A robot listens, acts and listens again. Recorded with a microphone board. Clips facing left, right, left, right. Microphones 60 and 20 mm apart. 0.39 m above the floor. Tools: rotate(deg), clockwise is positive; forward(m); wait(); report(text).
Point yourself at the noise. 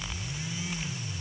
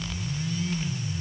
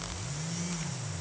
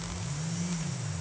wait()
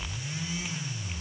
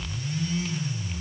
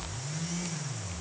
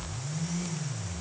wait()
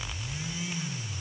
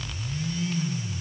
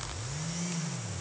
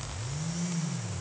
report("I can't make out anything.")